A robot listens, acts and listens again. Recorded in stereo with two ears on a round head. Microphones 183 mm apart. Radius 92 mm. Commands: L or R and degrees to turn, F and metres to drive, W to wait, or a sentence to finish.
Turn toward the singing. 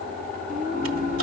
R40
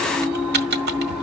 Facing the singing, 1 to 2 m away.